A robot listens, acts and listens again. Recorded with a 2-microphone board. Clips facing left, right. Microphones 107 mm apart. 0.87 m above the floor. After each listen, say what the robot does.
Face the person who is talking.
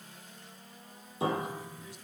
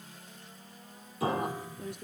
Turn 60° right.
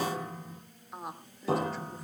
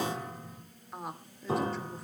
Facing the woman speaking, 2 to 4 m away.